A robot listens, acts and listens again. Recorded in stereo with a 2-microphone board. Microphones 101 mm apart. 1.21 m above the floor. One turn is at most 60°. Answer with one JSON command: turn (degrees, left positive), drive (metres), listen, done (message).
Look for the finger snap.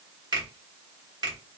{"turn": -45}
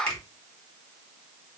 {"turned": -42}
{"turn": -60}
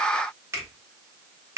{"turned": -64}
{"turn": -30}
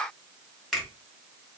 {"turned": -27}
{"done": "Facing the finger snap, 1 to 2 m away."}